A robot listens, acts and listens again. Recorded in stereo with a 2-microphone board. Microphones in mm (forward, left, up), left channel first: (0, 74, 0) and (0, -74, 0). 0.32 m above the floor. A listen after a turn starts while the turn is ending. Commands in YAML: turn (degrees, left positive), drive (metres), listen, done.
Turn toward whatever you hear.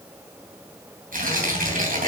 turn: -65
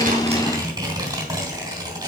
turn: -30
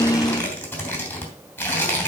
turn: 10
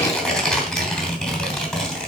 done: "Facing the tearing paper, 2 to 4 m away."